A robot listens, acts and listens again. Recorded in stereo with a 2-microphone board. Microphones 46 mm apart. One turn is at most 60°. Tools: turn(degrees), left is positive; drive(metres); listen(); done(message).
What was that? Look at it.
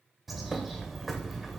turn(degrees=30)
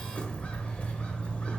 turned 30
turn(degrees=60)
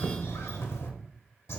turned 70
turn(degrees=60)
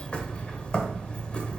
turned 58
turn(degrees=25)
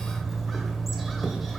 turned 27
done("Found it: a bird, straight ahead.")